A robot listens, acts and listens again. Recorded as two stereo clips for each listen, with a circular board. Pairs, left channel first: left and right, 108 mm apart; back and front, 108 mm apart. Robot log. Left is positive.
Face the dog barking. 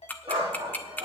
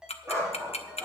note: The dog barking: 55° right.
cmd yaw -55
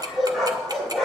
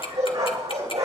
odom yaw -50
end: Found it: a dog barking, straight ahead, over 4 m away.